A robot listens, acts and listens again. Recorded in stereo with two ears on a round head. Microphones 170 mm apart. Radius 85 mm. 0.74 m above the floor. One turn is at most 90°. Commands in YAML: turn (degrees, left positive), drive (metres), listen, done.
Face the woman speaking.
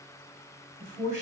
turn: 40
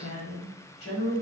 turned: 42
turn: 90
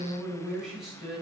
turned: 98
done: "Found it: a woman speaking, straight ahead, 1 to 2 m away."